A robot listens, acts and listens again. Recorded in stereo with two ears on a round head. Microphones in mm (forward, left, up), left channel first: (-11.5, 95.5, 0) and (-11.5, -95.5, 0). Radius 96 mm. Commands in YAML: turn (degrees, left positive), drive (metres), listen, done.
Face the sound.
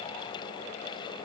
listen: true
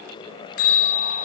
turn: 90
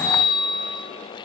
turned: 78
turn: 20
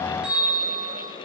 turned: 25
done: "Found it: a bell, straight ahead."